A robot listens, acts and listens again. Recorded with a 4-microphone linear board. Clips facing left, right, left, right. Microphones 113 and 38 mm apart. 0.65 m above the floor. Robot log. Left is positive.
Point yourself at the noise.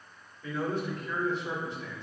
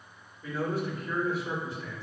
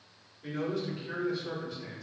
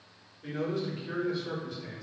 cmd yaw +30
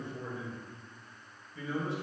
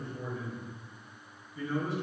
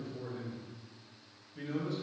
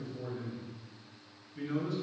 note: So it is at 150° left.
cmd yaw +150
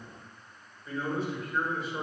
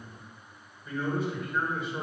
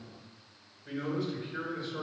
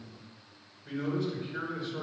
end: Facing the man speaking, over 4 m away.